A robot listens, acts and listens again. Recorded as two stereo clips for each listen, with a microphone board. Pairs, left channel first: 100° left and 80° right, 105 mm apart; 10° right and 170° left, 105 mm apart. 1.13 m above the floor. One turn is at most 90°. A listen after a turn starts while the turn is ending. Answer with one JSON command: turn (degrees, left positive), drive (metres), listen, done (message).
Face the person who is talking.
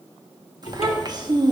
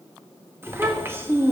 {"turn": -90}
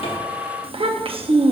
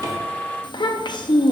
{"turn": -55}
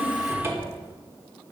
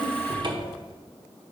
{"listen": true}
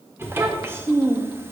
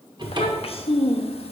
{"turn": -10}
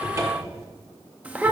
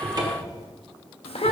{"done": "Found it: a child speaking, straight ahead."}